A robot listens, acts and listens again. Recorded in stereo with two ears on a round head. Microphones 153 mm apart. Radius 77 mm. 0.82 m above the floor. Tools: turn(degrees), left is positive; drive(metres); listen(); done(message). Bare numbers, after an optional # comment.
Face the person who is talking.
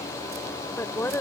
turn(30)
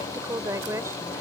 # So it is at 20° right.
turn(-20)
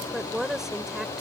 done("Facing the woman speaking.")